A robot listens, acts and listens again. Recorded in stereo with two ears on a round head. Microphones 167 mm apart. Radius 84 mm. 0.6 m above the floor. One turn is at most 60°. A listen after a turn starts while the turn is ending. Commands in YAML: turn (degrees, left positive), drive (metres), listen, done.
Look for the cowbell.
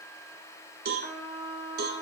turn: -55
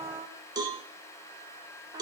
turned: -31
turn: -20
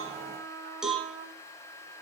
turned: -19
done: "Found it: a cowbell, straight ahead, 1 to 2 m away."